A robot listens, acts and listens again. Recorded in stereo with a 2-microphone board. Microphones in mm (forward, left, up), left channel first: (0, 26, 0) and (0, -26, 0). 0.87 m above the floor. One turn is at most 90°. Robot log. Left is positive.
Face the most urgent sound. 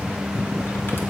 cmd idle
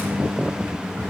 cmd idle
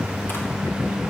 end: I can't make out anything urgent to turn to.